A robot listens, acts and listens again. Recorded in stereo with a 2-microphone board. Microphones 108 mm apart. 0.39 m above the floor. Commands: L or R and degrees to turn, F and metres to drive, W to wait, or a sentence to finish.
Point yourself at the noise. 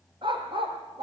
R55
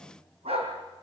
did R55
R65
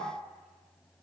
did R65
W
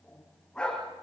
L10
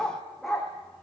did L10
Found it: a dog barking, straight ahead.